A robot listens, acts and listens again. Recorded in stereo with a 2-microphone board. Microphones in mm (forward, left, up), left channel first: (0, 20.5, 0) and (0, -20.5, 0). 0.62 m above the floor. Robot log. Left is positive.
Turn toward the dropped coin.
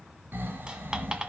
note: The dropped coin: about 20° right or 160° right.
cmd yaw -20
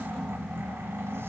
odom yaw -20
cmd idle
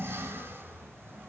end: I heard a dropped coin, but can't make it out now. It was about straight ahead or 140° right.